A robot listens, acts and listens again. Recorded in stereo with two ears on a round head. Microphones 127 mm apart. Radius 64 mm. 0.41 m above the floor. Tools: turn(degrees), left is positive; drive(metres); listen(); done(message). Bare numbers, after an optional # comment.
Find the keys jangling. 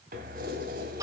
# The keys jangling: about 65° right or 115° right.
turn(-65)
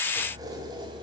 # So it is at 30° right.
turn(-30)
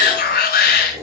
# The keys jangling is now 20° right.
turn(-20)
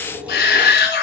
# The keys jangling is now 10° right.
turn(-10)
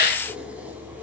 # The keys jangling is now 10° right.
turn(-10)
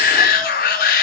listen()
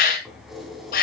done("Facing the keys jangling.")